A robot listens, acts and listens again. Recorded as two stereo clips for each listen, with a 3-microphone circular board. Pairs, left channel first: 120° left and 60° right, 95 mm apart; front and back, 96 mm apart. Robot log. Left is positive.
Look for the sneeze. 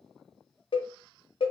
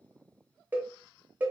cmd idle
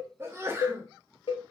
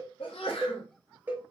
end: Found it: a sneeze, straight ahead, under 1 m away.